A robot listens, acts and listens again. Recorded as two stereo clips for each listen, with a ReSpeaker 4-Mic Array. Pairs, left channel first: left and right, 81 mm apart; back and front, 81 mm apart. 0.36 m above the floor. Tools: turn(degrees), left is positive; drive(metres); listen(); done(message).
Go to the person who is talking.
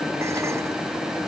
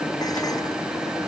listen()
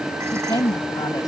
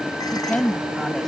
turn(degrees=95)
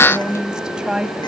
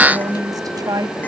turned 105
turn(degrees=-10)
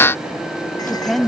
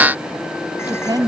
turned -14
drive(metres=1.0)
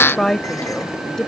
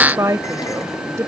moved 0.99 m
turn(degrees=10)
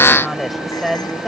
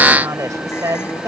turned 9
drive(metres=1.0)
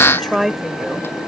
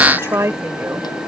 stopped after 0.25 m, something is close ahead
done("I am next to the woman speaking.")